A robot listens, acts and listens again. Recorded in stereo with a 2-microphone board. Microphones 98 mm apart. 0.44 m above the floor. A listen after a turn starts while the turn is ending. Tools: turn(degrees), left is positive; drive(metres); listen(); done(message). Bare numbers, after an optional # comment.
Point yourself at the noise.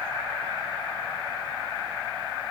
listen()
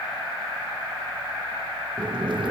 # The boiling: about 55° right or 125° right.
turn(-55)
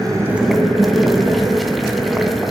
done("Found it: boiling, straight ahead, 2 to 4 m away.")